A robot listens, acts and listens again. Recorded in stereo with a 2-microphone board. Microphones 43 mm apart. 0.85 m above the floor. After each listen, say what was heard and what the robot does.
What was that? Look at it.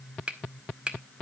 The finger snap: about 25° right or 155° right. Turn 25° right.
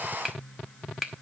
Facing the finger snap, 1 to 2 m away.